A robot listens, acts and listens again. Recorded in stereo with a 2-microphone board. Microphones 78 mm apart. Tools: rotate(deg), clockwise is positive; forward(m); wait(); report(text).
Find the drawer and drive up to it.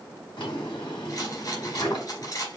rotate(-90)
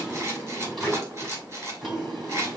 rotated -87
forward(1.0)
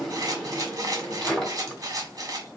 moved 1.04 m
forward(1.0)
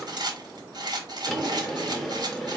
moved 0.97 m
forward(1.0)
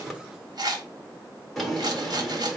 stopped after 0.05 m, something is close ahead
report("Arrived at the drawer, straight ahead.")